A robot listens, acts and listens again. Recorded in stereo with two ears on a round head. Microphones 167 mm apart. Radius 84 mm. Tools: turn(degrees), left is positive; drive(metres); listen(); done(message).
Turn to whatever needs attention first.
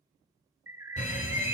turn(degrees=45)
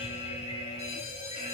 turn(degrees=80)
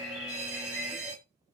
done("Facing the fire alarm.")